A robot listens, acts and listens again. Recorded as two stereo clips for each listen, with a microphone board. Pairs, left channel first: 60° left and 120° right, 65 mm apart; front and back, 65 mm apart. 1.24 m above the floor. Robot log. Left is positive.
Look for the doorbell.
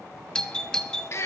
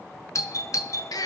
note: The doorbell: 15° right.
cmd yaw -15
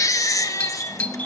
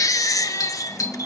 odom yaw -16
end: Facing the doorbell, 1 to 2 m away.